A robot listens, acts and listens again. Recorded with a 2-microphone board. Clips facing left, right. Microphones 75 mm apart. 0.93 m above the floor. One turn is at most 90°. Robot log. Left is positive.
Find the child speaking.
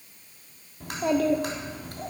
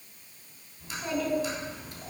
note: The child speaking: about 55° left or 125° left.
cmd yaw +55
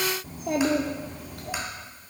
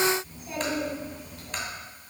note: So it is at 80° left.
cmd yaw +80
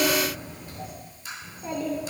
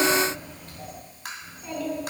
note: The child speaking is now 25° left.
cmd yaw +25
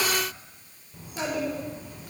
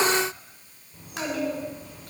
end: Found it: a child speaking, straight ahead, 2 to 4 m away.